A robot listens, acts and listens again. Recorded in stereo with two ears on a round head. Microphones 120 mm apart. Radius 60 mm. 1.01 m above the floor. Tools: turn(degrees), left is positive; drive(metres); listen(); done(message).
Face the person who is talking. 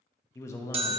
turn(degrees=20)
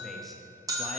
listen()
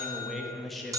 done("Facing the man speaking.")